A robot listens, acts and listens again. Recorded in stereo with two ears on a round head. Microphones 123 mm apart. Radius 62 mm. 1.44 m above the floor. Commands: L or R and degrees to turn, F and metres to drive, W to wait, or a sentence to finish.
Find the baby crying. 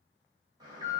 W
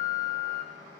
W
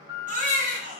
R60
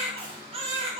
R50
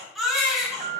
Facing the baby crying.